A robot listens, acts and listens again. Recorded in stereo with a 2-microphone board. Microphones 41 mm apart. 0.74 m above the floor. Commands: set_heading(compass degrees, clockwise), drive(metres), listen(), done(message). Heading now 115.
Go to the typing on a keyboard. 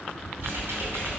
set_heading(190)
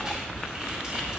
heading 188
set_heading(213)
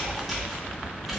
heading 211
drive(1.0)
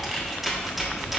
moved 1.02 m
drive(1.0)
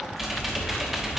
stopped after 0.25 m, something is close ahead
set_heading(221)
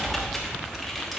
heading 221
done("I am next to the typing on a keyboard.")